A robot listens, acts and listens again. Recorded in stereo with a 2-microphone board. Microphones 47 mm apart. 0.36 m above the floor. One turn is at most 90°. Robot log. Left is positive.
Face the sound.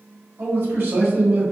note: The man speaking: about 50° right or 130° right.
cmd yaw -50
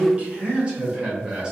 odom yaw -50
note: So it is at 15° right.
cmd yaw -15
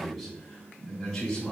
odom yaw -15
note: The man speaking is now 20° left.
cmd yaw +20
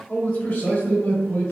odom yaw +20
note: The man speaking is now 30° left.
cmd yaw +30
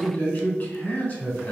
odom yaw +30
note: The man speaking is now 30° left.
cmd yaw +30
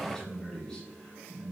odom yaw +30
note: The man speaking is now 10° left.
cmd yaw +10
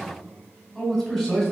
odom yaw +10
end: Facing the man speaking, 1 to 2 m away.